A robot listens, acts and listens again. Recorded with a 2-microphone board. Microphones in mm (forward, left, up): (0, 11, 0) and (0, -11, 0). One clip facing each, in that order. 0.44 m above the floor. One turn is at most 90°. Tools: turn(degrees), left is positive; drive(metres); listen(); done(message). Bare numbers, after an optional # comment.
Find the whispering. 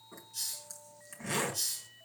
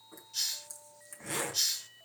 listen()
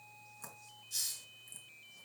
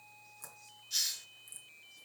listen()
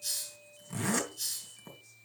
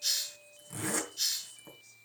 done("I can't make out whispering, only a zipper and a hiss.")